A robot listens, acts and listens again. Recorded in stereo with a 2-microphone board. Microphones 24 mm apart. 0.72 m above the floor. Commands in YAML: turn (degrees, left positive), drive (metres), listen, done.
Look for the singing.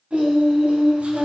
turn: -65
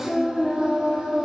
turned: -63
turn: -35
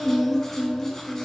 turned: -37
turn: 10
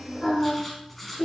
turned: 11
done: "Facing the singing."